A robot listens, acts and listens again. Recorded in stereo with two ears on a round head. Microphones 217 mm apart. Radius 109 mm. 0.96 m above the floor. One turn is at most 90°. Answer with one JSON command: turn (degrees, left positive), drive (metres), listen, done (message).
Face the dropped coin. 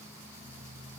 {"listen": true}
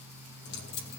{"turn": 45}
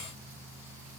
{"listen": true}
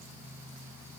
{"done": "I heard a dropped coin, but can't make it out now. It was about straight ahead or 90° left."}